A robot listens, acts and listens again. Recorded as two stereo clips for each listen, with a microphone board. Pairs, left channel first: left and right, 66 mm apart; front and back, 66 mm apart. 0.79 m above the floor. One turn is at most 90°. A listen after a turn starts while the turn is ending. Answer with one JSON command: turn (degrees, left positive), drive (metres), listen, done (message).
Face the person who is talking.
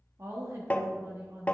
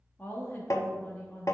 {"turn": -55}
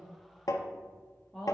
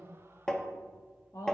{"done": "Facing the woman speaking."}